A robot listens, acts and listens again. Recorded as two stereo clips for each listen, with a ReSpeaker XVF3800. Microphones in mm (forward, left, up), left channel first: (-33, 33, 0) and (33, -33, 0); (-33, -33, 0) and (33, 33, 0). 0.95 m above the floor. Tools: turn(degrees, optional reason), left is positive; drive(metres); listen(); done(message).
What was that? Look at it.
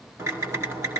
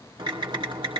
turn(degrees=15, reason="The typing on a keyboard: 15° left.")
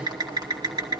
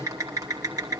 done("Found it: typing on a keyboard, straight ahead, 2 to 4 m away.")